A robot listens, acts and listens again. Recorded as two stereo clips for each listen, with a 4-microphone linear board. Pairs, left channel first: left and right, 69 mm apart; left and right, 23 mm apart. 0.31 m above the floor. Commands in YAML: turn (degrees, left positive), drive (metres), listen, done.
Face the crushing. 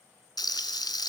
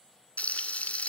listen: true
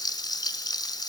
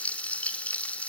listen: true
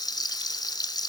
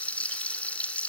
done: "I can't make out crushing to turn to."